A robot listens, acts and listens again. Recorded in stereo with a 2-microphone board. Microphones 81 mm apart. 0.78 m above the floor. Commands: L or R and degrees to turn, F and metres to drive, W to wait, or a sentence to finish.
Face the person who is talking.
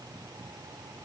W
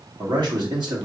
R60
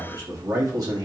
R50
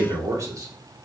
R45
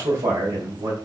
R45
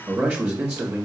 R15
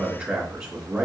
Facing the man speaking.